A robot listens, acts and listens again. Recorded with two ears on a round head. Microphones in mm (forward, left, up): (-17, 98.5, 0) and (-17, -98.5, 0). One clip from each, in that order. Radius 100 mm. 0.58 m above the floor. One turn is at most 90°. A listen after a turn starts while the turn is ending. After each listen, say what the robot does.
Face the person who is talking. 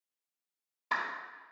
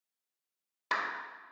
Keep listening.
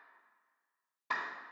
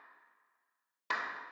Keep listening.
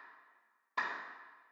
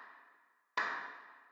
I can't make out anyone speaking, only a clap.